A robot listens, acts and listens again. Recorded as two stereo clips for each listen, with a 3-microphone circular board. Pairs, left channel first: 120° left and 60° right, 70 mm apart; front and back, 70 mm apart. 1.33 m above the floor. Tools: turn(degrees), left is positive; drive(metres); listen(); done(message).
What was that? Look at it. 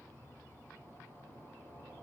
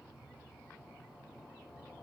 listen()
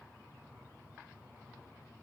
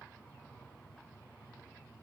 listen()
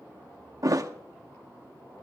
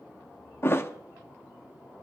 turn(degrees=-50)
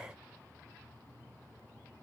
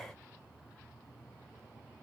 done("I heard a thud from this way, but can't make it out now.")